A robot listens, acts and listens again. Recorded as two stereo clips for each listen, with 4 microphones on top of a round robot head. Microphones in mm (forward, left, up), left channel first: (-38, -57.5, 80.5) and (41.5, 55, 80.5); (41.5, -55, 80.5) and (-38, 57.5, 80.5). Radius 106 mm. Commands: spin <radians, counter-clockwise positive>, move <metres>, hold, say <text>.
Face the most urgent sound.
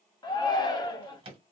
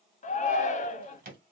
spin -1.22
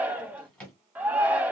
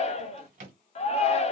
spin -0.44
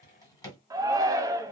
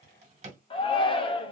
spin -0.17
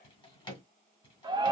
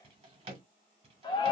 say Found it: a shout, straight ahead, under 1 m away.